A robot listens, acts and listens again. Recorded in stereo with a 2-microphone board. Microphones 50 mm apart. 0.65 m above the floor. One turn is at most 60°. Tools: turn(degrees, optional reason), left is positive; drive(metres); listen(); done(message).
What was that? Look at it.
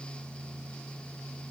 listen()
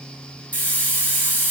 turn(degrees=25, reason="The hiss: about 25° left or 155° left.")
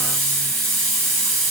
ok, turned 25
done("Found it: a hiss, straight ahead, 2 to 4 m away.")